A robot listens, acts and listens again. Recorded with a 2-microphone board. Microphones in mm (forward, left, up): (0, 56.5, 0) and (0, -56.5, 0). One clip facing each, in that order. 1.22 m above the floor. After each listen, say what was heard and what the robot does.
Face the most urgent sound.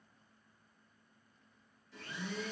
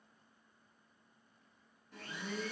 Keep listening.
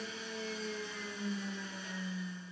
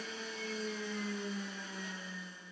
Keep listening.
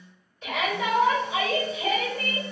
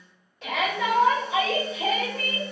Turn 90° right.
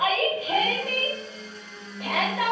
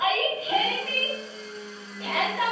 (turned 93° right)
So it is at 10° left. Turn 10° left.
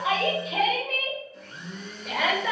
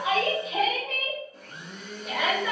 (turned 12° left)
Facing the shout, 1 to 2 m away.